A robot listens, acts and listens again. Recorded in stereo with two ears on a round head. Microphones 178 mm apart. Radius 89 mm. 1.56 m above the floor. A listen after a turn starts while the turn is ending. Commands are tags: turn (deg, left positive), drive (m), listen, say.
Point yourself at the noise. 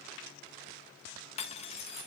<turn deg="35"/>
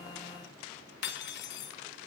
<turn deg="105"/>
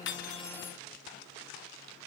<listen/>
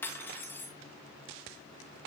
<turn deg="10"/>
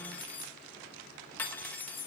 <turn deg="10"/>
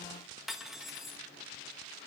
<say>Facing the cutlery clinking.</say>